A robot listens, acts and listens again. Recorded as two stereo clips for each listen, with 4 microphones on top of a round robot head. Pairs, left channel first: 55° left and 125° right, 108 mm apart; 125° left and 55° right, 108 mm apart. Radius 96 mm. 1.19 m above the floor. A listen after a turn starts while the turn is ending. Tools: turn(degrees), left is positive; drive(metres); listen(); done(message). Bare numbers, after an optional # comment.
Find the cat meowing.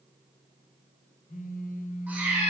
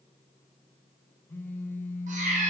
# The cat meowing: 50° right.
turn(-50)
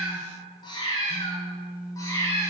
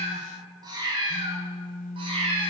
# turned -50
# The cat meowing is now 15° right.
turn(-15)
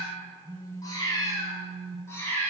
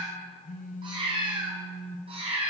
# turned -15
# The cat meowing is now 15° right.
turn(-15)
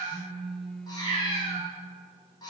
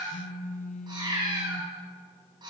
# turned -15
done("Found it: a cat meowing, straight ahead, 2 to 4 m away.")